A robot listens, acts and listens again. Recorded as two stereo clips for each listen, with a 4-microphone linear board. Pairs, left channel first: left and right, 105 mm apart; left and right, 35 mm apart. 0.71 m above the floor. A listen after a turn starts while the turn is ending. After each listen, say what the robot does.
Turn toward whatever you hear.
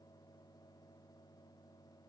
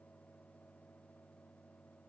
Keep listening.
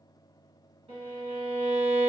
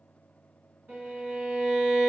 Turn 75° right.
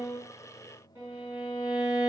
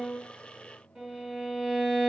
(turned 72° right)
Turn 25° right.
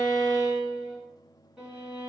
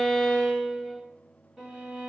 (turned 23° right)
Found it: a violin, straight ahead.